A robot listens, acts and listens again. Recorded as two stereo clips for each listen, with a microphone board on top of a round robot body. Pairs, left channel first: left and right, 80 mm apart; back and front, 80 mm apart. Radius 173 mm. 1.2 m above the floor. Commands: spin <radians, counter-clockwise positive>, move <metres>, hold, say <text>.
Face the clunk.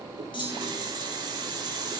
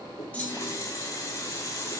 spin 1.92
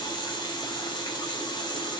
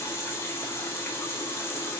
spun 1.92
say I heard a clunk from this way, but can't make it out now.